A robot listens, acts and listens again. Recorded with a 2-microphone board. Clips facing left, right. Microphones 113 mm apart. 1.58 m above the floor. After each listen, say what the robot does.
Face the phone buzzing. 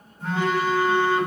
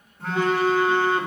Turn 60° right.
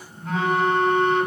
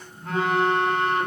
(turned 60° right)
Turn 55° right.
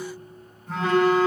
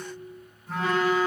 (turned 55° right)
Found it: a phone buzzing, straight ahead, 2 to 4 m away.